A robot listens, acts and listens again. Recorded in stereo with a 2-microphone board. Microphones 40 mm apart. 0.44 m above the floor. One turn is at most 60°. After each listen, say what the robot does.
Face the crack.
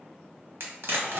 Turn 60° right.
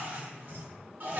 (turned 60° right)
Keep listening.
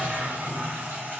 I heard a crack, but can't make it out now. It was about 15° right or 45° right.